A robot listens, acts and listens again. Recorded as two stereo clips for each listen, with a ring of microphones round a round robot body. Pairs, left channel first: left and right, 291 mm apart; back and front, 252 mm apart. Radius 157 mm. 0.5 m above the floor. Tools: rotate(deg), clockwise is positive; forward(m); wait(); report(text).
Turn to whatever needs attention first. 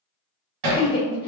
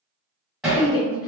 rotate(-160)
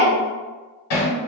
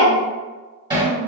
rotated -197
rotate(35)
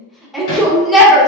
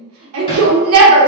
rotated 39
report("Found it: a shout, straight ahead, 1 to 2 m away.")